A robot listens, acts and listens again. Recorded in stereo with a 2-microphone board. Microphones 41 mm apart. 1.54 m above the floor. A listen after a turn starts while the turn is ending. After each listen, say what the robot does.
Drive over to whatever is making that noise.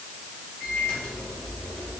Turn 45° left.
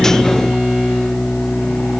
Turn 85° left.
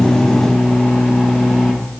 Drive 1.0 m forward.
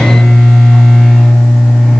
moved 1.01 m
Turn 10° left.
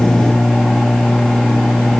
Drive 1.0 m forward.
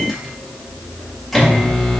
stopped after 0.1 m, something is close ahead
Arrived at the microwave, straight ahead.